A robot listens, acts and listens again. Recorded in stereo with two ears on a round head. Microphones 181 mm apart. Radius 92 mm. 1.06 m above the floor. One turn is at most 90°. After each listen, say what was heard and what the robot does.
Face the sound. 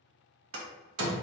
Turn 90° right.
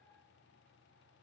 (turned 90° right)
I heard a door slam from this way, but can't make it out now.